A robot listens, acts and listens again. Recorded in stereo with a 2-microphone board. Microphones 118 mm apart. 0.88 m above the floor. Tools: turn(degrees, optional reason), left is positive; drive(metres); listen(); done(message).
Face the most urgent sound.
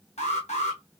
turn(degrees=65, reason="The alarm: about 65° left or 115° left.")
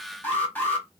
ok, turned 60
turn(degrees=15, reason="So it is at 15° left.")
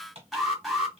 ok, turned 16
done("Facing the alarm.")